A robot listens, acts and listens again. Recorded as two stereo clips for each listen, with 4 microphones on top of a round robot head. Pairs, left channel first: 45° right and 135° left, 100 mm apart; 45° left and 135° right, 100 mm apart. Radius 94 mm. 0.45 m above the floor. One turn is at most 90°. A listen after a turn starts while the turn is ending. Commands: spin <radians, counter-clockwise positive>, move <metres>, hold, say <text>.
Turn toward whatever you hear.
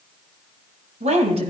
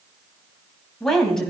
spin 1.57
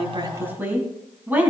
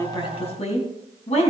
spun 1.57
spin 1.05
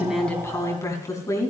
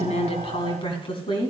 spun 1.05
spin 0.17
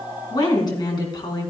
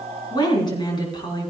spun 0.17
say Found it: a woman speaking, straight ahead.